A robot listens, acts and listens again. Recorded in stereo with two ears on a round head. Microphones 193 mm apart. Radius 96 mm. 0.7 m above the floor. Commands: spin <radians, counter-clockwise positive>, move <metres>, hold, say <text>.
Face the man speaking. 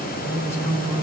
spin 0.52
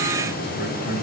spin 2.27
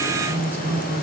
spin 0.17
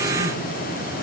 hold
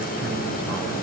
hold
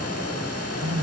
spin -0.17
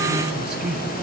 say Found it: a man speaking, straight ahead, over 4 m away.